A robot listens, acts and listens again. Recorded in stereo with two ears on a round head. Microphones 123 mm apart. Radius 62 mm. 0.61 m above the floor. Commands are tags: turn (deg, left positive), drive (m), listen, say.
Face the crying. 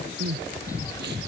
<turn deg="-90"/>
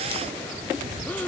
<turn deg="10"/>
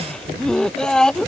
<say>Found it: crying, straight ahead.</say>